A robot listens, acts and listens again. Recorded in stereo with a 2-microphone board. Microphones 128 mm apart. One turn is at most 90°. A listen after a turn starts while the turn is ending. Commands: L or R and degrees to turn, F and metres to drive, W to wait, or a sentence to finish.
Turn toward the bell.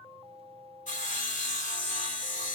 W
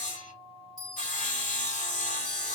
R35
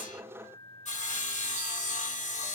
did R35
W
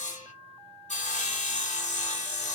W
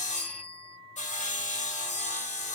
R90
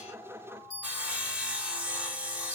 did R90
R30
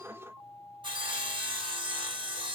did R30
W
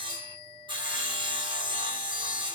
Found it: a bell, straight ahead.